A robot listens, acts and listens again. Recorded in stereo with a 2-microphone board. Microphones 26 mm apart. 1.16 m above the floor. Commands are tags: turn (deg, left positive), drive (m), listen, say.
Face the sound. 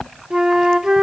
<turn deg="-25"/>
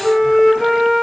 <say>Found it: a flute, straight ahead.</say>